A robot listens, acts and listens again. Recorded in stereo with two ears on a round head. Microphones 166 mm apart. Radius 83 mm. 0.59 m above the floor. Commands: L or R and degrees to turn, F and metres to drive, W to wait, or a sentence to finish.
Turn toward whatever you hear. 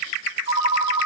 R45
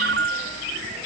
R85
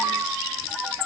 Found it: a ringtone, straight ahead, 1 to 2 m away.